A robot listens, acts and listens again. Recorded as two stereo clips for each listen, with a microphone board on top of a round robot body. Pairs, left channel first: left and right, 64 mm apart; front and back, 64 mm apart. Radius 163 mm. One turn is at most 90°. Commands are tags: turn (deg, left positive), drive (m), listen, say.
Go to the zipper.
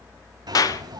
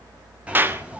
<turn deg="-90"/>
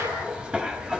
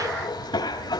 <turn deg="-15"/>
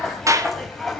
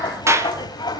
<drive m="1.0"/>
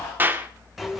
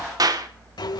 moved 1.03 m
<drive m="1.0"/>
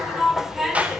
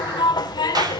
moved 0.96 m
<drive m="1.0"/>
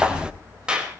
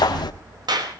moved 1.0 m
<turn deg="-15"/>
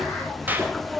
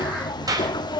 <drive m="1.0"/>
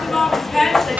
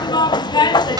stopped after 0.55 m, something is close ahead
<say>I am next to the zipper.</say>